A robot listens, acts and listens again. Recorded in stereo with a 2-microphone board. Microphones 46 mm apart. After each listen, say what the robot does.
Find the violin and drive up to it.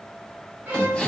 Turn 40° right.
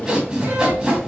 Keep listening.
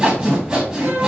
Turn 100° right.
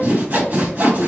Keep listening.
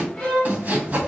Turn 20° left.
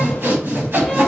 Keep listening.
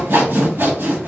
Keep listening.
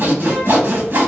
Facing where the violin came from. I can't hear it now. I did not reach it.